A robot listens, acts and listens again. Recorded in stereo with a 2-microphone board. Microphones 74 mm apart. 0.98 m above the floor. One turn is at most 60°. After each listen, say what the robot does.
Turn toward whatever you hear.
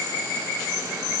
Keep listening.
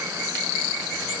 Keep listening.
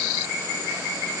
I can't make out anything.